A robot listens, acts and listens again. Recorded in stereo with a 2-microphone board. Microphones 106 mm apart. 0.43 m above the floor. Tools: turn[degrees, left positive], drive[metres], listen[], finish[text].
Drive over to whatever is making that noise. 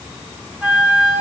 Action: turn[-30]
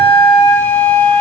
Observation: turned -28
Thought: So it is at 15° left.
Action: turn[15]
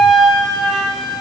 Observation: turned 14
Action: drive[1.0]
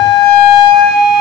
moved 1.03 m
Action: drive[1.0]
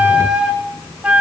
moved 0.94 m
Thought: The flute is now 10° right.
Action: turn[-10]
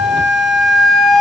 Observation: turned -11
Action: drive[1.0]
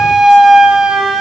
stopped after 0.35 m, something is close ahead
Action: finish[I am next to the flute.]